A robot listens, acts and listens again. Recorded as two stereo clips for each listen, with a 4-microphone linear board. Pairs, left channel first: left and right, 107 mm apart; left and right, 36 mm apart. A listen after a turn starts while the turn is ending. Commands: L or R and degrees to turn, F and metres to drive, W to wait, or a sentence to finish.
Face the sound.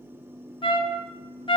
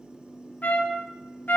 L55
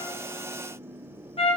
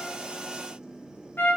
L70
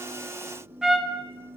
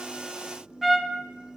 Found it: a trumpet, straight ahead.